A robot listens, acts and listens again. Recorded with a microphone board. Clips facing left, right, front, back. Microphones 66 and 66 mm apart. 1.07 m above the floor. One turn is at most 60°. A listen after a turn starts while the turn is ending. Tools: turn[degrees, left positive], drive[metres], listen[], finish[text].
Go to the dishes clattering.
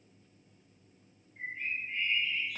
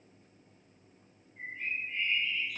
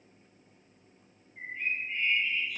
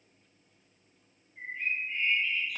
Action: listen[]
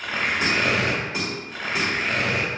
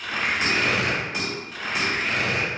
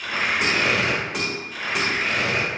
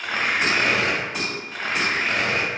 Thought: The dishes clattering: 25° left.
Action: turn[25]
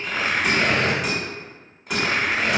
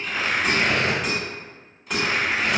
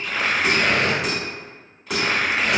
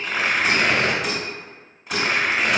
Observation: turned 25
Action: drive[1.0]
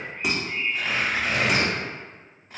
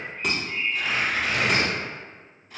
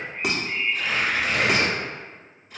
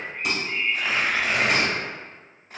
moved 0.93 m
Thought: The dishes clattering is now 10° left.
Action: turn[10]
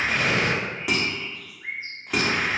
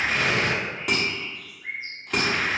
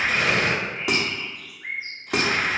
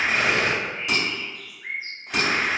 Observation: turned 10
Action: drive[1.0]
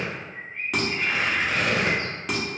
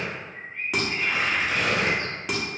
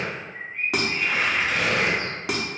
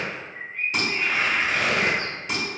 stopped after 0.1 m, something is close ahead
Action: finish[Arrived at the dishes clattering, straight ahead.]